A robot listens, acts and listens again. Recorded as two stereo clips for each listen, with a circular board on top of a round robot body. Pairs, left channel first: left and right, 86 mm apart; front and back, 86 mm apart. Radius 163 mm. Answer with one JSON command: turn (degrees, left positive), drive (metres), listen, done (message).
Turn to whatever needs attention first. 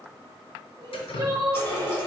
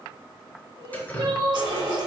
{"turn": -140}
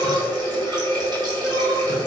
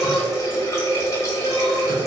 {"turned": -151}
{"turn": 10}
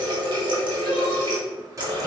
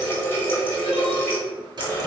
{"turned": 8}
{"listen": true}
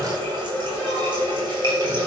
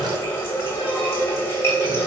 {"done": "I heard crying from this way, but can't make it out now."}